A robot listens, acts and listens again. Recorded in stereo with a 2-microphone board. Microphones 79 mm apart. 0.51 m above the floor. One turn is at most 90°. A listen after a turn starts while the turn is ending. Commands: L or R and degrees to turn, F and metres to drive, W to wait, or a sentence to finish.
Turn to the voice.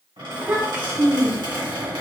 R25
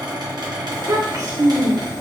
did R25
R90
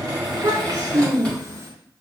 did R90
R50
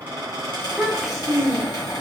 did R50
Facing the child speaking, under 1 m away.